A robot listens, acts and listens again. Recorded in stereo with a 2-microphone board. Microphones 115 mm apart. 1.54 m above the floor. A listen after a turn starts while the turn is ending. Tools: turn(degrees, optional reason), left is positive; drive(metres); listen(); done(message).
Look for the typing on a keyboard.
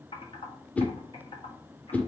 turn(degrees=50, reason="The typing on a keyboard: about 50° left or 130° left.")
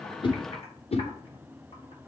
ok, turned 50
listen()
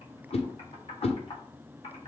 turn(degrees=70, reason="So it is at 70° left.")
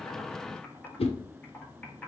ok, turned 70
turn(degrees=10, reason="The typing on a keyboard is now 10° left.")
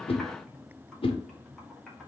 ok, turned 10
listen()
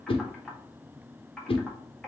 done("Found it: typing on a keyboard, straight ahead, 1 to 2 m away.")